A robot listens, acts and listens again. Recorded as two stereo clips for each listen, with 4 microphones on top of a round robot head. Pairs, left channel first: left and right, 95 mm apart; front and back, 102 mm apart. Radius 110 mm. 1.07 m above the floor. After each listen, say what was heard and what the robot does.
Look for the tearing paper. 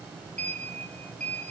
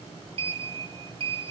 Keep listening.
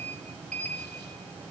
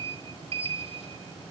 Keep listening.
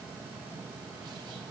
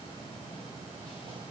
I can't make out tearing paper to turn to.